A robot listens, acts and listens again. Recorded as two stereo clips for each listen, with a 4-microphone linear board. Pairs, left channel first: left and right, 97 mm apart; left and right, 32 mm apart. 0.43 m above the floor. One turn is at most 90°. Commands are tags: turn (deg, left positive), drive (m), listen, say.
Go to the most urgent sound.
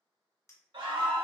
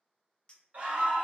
<turn deg="-55"/>
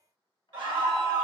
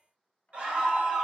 <turn deg="-60"/>
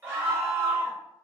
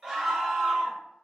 <turn deg="-30"/>
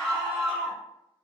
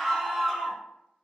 <turn deg="10"/>
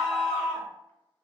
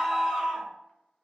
<drive m="1.0"/>
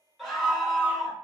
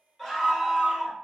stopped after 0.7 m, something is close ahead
<say>I am next to the scream.</say>